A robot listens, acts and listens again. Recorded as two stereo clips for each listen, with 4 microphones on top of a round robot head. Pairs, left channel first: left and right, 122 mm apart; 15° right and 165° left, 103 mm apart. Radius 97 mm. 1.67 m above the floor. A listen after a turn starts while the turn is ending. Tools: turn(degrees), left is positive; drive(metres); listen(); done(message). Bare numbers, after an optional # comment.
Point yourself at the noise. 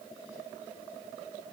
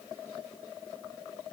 listen()
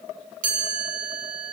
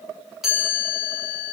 # The chime: 105° right.
turn(-105)
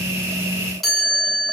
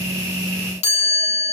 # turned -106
done("Facing the chime, over 4 m away.")